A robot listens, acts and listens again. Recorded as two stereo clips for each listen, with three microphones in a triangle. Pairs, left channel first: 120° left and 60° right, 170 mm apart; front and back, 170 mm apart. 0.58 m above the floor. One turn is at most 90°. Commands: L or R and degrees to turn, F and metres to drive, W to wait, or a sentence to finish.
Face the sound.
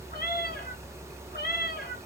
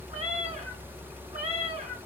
L90
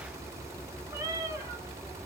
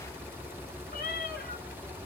L15
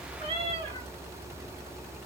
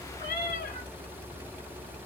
Found it: a cat meowing, straight ahead, 1 to 2 m away.